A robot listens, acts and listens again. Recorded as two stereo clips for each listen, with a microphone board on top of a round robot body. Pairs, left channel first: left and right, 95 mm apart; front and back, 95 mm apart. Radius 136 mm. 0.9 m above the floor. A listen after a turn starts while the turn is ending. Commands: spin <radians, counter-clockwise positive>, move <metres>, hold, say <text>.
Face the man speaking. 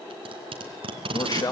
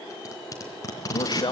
spin 0.70
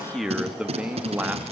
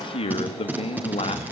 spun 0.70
spin -0.26
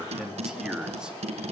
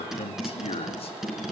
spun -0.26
spin -0.17
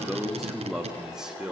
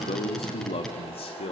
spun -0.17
say Facing the man speaking, 2 to 4 m away.